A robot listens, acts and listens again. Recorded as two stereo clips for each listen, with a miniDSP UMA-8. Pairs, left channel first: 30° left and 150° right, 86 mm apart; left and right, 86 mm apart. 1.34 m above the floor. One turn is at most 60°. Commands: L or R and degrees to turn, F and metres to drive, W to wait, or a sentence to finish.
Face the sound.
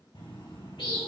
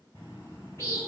L35
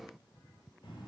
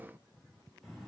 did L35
Found it: a bird, straight ahead, 2 to 4 m away.